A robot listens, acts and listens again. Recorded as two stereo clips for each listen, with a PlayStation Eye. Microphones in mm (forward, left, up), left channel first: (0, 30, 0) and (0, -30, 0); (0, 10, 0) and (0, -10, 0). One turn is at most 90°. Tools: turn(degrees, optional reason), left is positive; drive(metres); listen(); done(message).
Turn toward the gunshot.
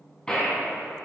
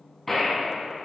turn(degrees=30)
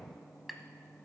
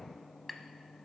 listen()
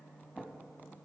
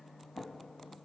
done("I heard a gunshot, but can't make it out now. It was about 15° right or 135° left.")